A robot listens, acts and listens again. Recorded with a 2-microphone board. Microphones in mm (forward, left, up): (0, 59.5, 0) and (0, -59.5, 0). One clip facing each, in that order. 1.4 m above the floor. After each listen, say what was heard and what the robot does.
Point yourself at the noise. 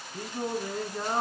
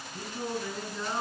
The singing: about 45° left or 135° left. Turn 45° left.
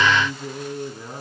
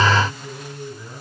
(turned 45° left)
So it is at 105° left. Turn 105° left.
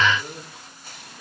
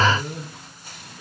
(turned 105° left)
The singing is now 10° left. Turn 10° left.
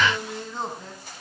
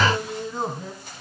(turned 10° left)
Found it: singing, straight ahead.